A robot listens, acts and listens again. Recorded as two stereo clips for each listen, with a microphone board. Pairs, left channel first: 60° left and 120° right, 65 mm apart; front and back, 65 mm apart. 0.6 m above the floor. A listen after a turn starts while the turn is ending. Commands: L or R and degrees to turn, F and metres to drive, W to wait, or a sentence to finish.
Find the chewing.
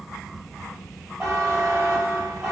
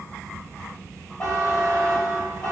W
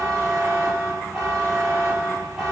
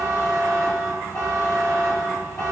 W
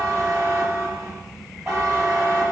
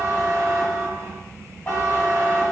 I can't make out chewing to turn to.